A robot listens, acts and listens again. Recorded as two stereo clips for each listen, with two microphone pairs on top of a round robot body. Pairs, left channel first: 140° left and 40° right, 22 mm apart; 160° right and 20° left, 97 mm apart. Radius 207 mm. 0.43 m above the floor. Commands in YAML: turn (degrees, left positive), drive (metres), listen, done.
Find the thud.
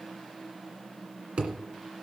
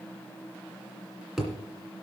turn: -65
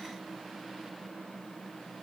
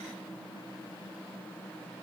done: "I heard a thud from this way, but can't make it out now."